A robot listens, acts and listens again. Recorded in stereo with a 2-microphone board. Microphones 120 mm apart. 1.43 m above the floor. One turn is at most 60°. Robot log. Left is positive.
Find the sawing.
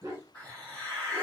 cmd idle
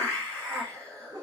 cmd idle
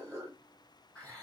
end: I can't make out sawing to turn to.